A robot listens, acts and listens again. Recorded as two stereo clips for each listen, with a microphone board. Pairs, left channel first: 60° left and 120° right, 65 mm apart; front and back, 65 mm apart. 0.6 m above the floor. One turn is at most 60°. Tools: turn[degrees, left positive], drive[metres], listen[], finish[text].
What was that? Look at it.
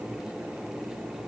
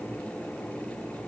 Action: listen[]
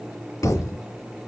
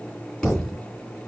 Thought: The thud: 80° left.
Action: turn[60]
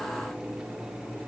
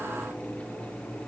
Thought: Nothing new. It was at 20° left.
Action: turn[20]
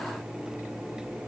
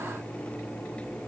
Action: finish[Facing where the thud came from. I can't hear it now.]